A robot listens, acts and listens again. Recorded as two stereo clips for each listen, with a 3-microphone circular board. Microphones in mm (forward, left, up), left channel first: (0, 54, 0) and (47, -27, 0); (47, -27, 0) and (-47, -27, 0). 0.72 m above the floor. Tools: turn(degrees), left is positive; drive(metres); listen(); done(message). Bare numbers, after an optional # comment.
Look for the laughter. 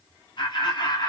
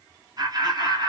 # The laughter: 150° left.
turn(150)
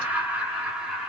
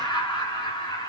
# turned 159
# The laughter is now 20° left.
turn(20)
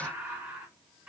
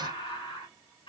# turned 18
# The laughter is now 15° left.
turn(15)
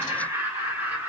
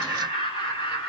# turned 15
done("Found it: laughter, straight ahead, 2 to 4 m away.")